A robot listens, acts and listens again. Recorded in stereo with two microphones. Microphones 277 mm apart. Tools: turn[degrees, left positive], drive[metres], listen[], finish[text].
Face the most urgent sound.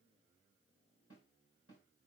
Action: listen[]
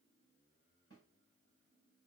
Action: listen[]
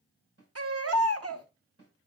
Thought: The baby crying: about 60° right or 120° right.
Action: turn[-60]
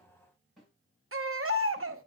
Thought: So it is at 60° right.
Action: turn[-60]
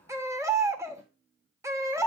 Thought: The baby crying is now 10° right.
Action: turn[-10]
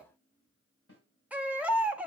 Action: finish[Found it: a baby crying, straight ahead.]